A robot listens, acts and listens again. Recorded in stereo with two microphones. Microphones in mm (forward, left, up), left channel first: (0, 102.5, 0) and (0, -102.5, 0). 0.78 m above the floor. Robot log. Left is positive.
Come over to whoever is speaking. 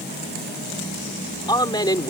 note: The man speaking: about 20° left or 160° left.
cmd yaw +20
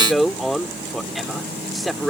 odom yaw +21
cmd fwd 1.0
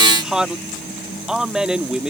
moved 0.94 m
cmd fwd 1.0
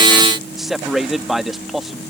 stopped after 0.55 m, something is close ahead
end: Arrived at the man speaking, straight ahead.